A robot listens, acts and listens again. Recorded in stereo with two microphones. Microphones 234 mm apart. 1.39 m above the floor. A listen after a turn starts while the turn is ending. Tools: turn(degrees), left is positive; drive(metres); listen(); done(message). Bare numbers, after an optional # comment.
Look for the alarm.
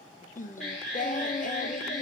turn(30)
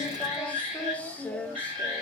# So it is at 30° right.
turn(-30)
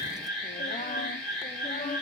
done("Found it: an alarm, straight ahead.")